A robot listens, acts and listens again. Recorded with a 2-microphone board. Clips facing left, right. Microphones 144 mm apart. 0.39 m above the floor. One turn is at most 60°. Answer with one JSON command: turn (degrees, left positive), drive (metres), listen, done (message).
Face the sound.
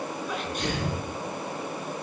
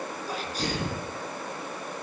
{"turn": -35}
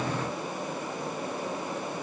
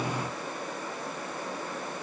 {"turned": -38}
{"listen": true}
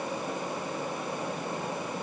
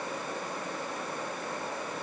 {"done": "I heard a sneeze, but can't make it out now. It was about 5° left or 105° right."}